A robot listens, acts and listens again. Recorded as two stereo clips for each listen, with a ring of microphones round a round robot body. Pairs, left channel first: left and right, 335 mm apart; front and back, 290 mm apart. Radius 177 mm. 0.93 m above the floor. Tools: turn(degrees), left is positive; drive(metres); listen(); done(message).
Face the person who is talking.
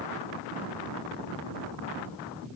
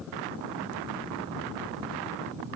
listen()
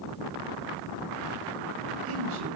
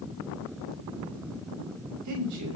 turn(degrees=-140)
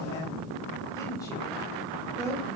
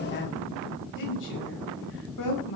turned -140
turn(degrees=10)
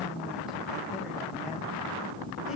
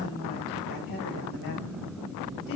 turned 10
listen()
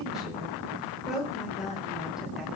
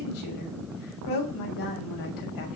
done("Facing the woman speaking.")